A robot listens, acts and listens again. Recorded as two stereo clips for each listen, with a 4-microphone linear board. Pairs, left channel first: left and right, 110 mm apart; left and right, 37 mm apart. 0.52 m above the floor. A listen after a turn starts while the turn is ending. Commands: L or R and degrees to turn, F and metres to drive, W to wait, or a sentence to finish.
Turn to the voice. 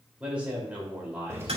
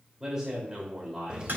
R30
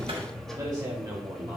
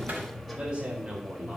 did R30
R140
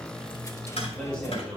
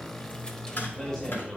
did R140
L10
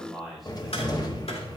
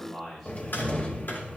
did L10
Facing the man speaking.